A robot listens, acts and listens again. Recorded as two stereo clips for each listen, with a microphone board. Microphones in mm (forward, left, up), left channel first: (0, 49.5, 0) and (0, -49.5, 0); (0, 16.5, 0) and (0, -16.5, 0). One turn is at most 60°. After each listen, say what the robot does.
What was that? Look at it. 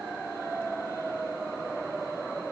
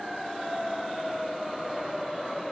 Keep listening.
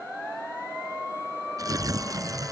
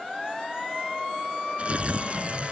Turn 35° right.
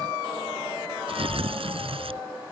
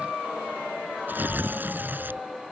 Turn 60° right.
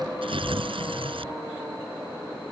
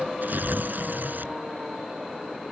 Turn 60° right.
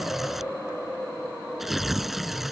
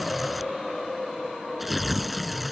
Found it: tearing paper, straight ahead.